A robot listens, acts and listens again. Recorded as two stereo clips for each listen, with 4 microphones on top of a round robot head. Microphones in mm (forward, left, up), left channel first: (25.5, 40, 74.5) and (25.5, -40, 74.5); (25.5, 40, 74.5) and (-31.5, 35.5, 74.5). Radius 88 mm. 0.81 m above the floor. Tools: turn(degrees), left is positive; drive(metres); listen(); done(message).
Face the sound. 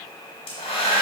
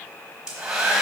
turn(degrees=110)
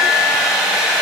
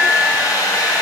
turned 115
done("Facing the hair dryer.")